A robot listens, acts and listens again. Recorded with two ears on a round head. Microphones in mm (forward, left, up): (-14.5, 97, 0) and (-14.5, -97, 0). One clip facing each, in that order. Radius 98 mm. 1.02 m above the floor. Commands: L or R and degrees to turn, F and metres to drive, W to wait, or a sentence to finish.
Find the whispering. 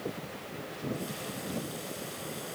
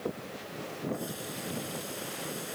W
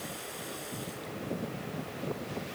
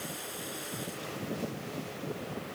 W
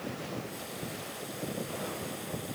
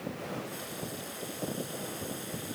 I can't make out whispering to turn to.